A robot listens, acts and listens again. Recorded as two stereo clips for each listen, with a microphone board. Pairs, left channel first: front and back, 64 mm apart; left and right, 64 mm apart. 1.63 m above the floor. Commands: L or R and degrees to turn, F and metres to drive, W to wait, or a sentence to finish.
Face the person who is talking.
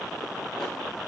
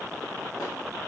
W
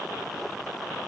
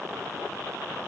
W
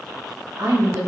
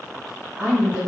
R160
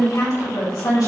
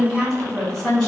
Facing the woman speaking, 2 to 4 m away.